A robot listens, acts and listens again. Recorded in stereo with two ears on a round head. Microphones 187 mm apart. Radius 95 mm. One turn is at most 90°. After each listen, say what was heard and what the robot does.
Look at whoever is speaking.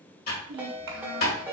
The child speaking: about 60° right or 120° right. Turn 60° right.
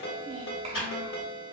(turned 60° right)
So it is at 35° right. Turn 35° right.
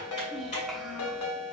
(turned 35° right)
Facing the child speaking, 1 to 2 m away.